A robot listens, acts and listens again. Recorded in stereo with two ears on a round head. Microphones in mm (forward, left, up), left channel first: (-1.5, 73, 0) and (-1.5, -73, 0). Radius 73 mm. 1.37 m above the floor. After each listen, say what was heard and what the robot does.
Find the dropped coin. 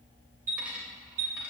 Turn 30° right.
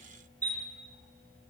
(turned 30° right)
Keep listening.
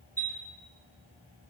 I heard a dropped coin, but can't make it out now. It was about 25° left or 145° right.